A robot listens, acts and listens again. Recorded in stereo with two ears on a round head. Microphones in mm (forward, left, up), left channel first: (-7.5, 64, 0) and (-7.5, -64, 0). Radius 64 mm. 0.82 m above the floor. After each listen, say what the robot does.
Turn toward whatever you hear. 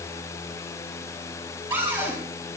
Turn 15° right.
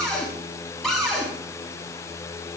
Facing the cupboard door.